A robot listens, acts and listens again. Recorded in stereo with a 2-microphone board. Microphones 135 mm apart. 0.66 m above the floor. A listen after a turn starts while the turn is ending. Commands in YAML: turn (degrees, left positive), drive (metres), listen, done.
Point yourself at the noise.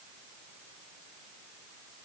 listen: true
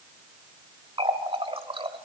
turn: -40
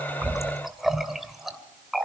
done: "Found it: a running tap, straight ahead, 2 to 4 m away."